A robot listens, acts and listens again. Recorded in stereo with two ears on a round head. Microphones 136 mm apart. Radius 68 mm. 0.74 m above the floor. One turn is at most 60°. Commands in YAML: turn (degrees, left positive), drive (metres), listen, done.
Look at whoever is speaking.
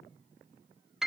listen: true
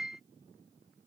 listen: true
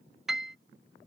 done: "I can't make out anyone speaking to turn to."